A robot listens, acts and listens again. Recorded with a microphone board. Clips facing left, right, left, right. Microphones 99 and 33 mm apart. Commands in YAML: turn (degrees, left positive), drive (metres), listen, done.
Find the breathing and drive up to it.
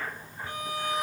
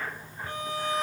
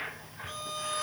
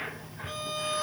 listen: true
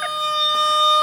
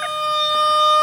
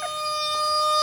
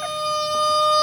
listen: true
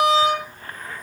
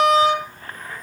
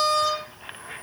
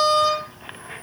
done: "I can't make out breathing, only a violin."